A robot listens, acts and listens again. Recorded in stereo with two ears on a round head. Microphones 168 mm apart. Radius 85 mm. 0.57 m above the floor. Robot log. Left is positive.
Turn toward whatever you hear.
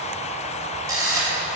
note: The camera shutter: about 20° right or 160° right.
cmd yaw -20
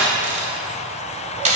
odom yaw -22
note: So it is at 135° right.
cmd yaw -135
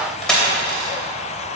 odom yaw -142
end: Found it: a camera shutter, straight ahead, 2 to 4 m away.